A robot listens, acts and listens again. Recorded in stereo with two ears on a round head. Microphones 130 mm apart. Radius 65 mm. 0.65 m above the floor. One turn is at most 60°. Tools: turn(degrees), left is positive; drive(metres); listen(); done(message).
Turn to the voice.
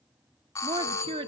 turn(degrees=-35)
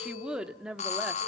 done("Facing the woman speaking, 1 to 2 m away.")